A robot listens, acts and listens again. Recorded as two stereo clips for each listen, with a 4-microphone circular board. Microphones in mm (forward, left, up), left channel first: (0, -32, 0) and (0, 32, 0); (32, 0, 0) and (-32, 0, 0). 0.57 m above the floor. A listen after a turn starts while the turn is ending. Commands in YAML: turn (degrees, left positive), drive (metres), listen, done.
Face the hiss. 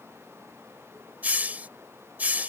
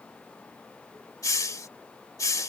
turn: 25
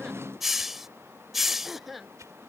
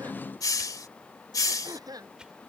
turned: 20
done: "Found it: a hiss, straight ahead."